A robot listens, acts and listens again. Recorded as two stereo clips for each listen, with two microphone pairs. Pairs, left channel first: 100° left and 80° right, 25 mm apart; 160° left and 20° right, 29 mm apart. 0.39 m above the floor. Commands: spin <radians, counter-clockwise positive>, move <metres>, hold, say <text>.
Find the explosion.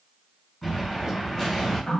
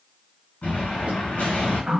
spin 3.05
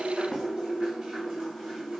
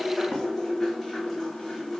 say I heard an explosion from this way, but can't make it out now.